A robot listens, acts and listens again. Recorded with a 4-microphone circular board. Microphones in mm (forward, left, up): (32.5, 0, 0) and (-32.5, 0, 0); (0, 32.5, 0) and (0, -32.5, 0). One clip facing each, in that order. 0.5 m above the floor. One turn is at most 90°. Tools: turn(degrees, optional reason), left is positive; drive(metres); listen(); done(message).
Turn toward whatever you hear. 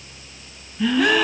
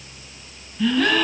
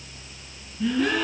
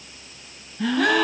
turn(degrees=-80, reason="The gasp: 80° right.")
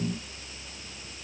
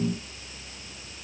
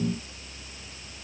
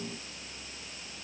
done("Facing where the gasp came from. I can't hear it now.")